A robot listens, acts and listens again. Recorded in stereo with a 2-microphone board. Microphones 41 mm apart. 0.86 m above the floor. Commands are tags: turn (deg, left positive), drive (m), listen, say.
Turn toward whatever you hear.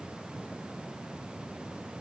<listen/>
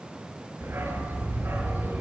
<turn deg="-65"/>
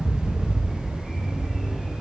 <say>Found it: a dog barking, straight ahead, over 4 m away.</say>